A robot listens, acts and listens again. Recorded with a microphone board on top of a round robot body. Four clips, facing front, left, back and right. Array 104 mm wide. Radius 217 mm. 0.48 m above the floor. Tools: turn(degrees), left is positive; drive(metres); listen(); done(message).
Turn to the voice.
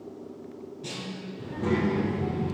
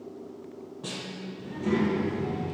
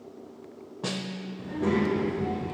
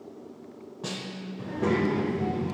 turn(degrees=-110)
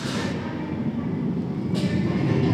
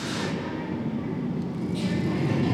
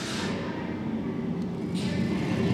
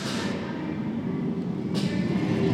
done("Facing the child speaking.")